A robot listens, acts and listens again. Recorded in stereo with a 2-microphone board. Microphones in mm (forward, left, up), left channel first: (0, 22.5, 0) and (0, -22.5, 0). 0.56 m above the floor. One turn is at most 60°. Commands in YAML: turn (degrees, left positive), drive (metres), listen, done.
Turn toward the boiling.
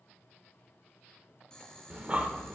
turn: 15
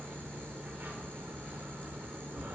listen: true
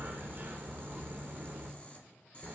turn: 60
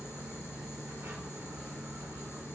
turn: 60
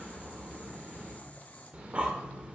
turn: 40
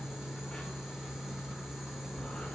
listen: true
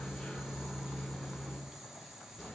turn: -10
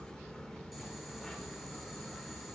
listen: true
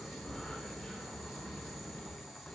done: "Facing the boiling."